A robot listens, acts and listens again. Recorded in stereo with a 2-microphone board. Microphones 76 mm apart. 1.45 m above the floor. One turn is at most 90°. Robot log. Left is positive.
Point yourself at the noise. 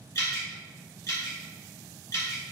note: The dripping: about 45° left or 135° left.
cmd yaw +45
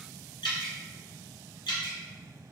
note: So it is at 90° left.
cmd yaw +90
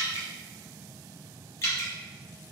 note: The dripping is now 35° left.
cmd yaw +35
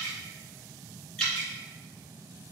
note: The dripping is now 10° left.
cmd yaw +10
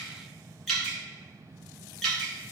end: Facing the dripping.